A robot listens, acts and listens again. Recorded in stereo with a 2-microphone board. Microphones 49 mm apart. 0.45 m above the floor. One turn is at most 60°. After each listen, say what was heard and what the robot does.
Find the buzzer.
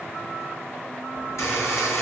Turn 60° left.
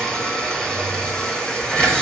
So it is at 15° left. Turn 15° left.
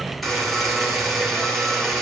Facing the buzzer, over 4 m away.